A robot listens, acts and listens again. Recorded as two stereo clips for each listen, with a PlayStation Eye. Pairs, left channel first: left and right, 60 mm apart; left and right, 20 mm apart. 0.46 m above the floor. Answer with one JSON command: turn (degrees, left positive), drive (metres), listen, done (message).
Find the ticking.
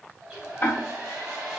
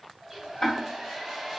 {"turn": 35}
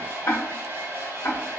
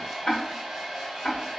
{"turn": 105}
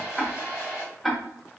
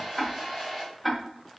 {"done": "Facing the ticking, under 1 m away."}